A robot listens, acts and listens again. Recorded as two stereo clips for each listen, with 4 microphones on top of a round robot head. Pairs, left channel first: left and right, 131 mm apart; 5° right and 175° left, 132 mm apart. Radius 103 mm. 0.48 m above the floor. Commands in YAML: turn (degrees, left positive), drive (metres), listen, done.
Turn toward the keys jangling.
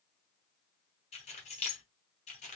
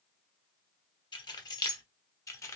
turn: 60
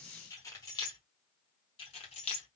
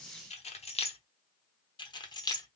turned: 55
turn: 50
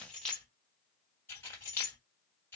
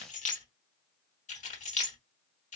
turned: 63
turn: 15
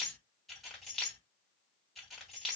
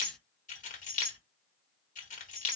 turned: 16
done: "Facing the keys jangling."